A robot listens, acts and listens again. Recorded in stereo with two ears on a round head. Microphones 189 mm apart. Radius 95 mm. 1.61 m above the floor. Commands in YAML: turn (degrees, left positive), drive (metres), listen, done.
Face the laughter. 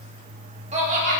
turn: -35
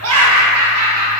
turn: -100
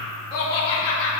turn: 30
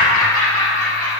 turn: 10
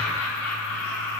done: "Found it: laughter, straight ahead."